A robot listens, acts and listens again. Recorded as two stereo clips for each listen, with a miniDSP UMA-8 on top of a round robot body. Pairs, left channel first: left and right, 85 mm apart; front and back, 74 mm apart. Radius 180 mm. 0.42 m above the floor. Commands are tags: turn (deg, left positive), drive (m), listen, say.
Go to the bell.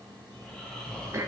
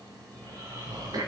<listen/>
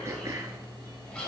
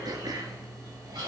<listen/>
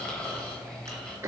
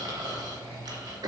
<say>I can't make out a bell to turn to.</say>